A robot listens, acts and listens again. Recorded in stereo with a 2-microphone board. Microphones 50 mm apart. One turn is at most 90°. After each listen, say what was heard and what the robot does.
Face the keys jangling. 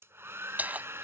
The keys jangling: about 35° right or 145° right. Turn 35° right.
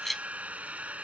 Facing the keys jangling.